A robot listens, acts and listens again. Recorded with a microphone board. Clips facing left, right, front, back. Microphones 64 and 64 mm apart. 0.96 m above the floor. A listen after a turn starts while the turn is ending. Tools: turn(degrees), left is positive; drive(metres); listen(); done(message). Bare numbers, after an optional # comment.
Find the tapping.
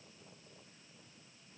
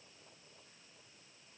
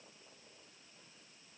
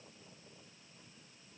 listen()
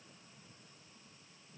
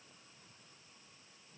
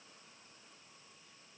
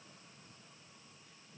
listen()
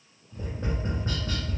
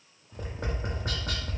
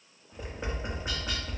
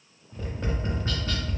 # The tapping: 75° right.
turn(-75)
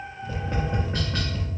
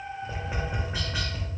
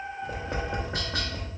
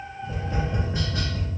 done("Found it: tapping, straight ahead.")